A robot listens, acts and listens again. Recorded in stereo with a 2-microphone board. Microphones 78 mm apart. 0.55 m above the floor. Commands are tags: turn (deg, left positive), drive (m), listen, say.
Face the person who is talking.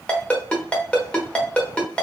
<listen/>
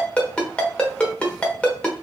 <listen/>
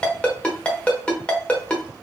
<say>I can't make out anyone speaking, only a ringtone.</say>